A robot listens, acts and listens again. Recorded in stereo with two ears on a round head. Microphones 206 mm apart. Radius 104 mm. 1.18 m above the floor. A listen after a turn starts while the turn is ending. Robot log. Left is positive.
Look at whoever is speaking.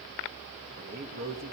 note: The man speaking: about 45° right or 135° right.
cmd yaw -45
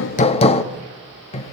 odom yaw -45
cmd idle
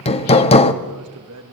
note: So it is at 90° right.
cmd yaw -90
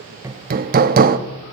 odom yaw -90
cmd idle
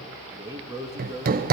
note: The man speaking is now 15° right.
cmd yaw -15
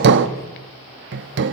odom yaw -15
cmd idle
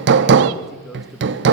cmd idle
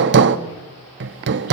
end: Facing where the man speaking came from. I can't hear it now.